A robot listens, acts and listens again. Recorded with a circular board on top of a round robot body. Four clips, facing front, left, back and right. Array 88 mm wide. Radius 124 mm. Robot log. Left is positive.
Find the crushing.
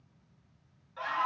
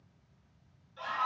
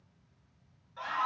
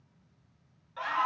cmd idle
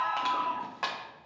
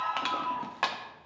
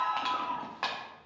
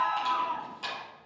note: The crushing: 95° left.
cmd yaw +95
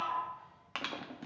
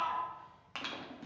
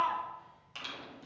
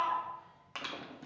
end: Found it: crushing, straight ahead, 1 to 2 m away.